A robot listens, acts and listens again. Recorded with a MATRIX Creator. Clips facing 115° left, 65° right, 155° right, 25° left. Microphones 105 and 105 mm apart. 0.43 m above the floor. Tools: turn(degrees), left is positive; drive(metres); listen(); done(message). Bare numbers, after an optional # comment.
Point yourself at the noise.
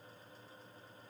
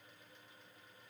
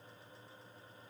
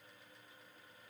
listen()
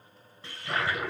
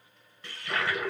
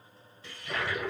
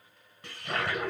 # The toilet flushing: 50° left.
turn(50)
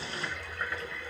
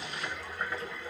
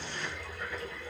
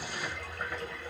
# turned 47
done("Found it: a toilet flushing, straight ahead.")